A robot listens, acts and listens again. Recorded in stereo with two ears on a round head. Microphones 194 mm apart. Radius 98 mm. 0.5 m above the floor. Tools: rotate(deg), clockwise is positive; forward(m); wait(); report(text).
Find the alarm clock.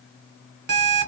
rotate(50)
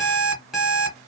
report("Found it: an alarm clock, straight ahead.")